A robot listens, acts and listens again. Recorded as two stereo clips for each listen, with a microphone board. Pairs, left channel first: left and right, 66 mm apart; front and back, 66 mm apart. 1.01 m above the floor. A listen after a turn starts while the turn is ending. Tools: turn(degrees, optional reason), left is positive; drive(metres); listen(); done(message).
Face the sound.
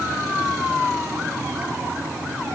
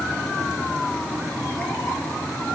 listen()
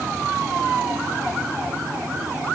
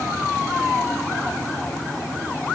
listen()
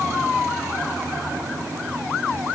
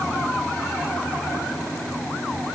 done("I can't make out anything to turn to.")